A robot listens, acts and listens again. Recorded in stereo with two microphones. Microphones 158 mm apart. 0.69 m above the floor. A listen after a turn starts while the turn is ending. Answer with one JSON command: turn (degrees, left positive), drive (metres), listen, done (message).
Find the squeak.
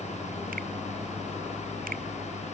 {"listen": true}
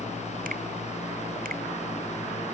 {"listen": true}
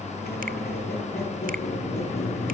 {"turn": 90}
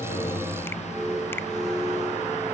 {"done": "Found it: a squeak, straight ahead, over 4 m away."}